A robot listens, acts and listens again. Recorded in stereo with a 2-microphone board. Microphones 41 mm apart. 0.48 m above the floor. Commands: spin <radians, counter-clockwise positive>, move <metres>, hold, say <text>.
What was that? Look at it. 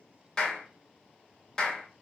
spin 0.35
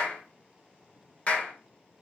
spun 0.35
spin 2.44
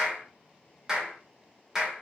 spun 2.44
spin -0.26
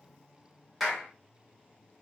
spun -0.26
say Facing the clap.